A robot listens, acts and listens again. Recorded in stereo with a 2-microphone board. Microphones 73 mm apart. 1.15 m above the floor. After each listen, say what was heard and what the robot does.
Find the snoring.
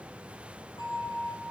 Keep listening.
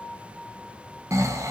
The snoring: about 45° right or 135° right. Turn 45° right.
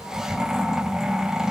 So it is at 10° right. Turn 10° right.
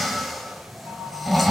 Facing the snoring.